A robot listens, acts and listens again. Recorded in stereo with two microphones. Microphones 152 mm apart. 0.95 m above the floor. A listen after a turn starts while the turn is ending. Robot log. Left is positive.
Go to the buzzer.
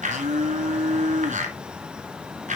cmd idle
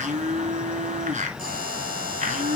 note: The buzzer: about 65° right or 115° right.
cmd yaw -65
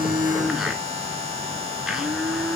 note: So it is at 45° right.
cmd yaw -45
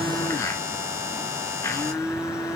note: The buzzer is now 20° right.
cmd yaw -20
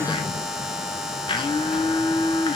cmd fwd 1.0
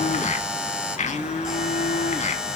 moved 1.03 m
cmd fwd 1.0
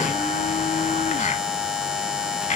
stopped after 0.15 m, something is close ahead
end: I am next to the buzzer.